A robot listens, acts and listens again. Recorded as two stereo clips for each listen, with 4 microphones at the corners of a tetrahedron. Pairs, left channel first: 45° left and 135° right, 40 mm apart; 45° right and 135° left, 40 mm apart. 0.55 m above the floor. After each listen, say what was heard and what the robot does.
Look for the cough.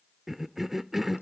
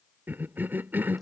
The cough: 140° left. Turn 140° left.
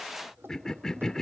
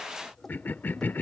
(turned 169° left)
The cough is now 30° right. Turn 30° right.
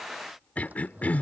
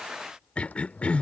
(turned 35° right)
Found it: a cough, straight ahead.